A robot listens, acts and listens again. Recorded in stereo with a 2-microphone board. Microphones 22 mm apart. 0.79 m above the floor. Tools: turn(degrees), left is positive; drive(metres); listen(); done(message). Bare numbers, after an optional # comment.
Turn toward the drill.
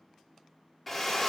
turn(30)
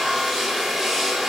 # So it is at 30° right.
turn(-30)
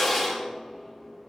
# The drill is now 10° right.
turn(-10)
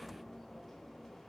listen()
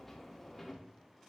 listen()
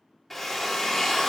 done("Found it: a drill, straight ahead.")